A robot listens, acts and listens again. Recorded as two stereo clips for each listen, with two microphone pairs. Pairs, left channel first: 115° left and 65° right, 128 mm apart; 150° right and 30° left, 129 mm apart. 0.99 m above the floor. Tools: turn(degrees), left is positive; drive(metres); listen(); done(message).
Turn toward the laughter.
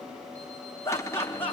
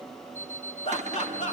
turn(degrees=-170)
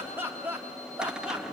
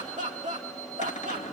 turn(degrees=15)
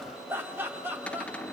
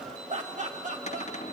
turn(degrees=10)
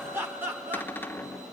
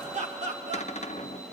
turn(degrees=10)
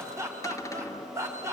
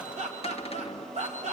done("Facing the laughter.")